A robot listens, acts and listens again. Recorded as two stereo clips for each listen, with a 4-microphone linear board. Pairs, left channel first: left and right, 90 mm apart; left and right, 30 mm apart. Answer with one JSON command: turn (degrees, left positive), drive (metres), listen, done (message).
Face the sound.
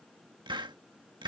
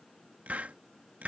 {"turn": -60}
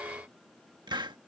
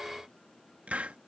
{"turn": -60}
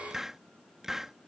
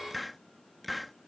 {"done": "Found it: a hiss, straight ahead."}